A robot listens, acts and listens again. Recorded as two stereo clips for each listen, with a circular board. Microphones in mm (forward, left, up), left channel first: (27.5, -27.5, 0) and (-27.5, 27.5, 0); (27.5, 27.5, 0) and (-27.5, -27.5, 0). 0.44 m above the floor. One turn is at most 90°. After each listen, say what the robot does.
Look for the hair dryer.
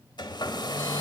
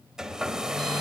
Turn 55° right.
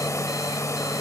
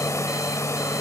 Found it: a hair dryer, straight ahead, 1 to 2 m away.